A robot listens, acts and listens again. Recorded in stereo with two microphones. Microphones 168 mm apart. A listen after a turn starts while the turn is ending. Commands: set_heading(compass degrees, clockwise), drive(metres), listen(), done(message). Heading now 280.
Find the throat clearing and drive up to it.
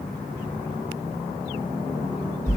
listen()
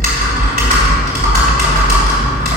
listen()
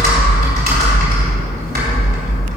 done("I can't make out throat clearing, only typing on a keyboard.")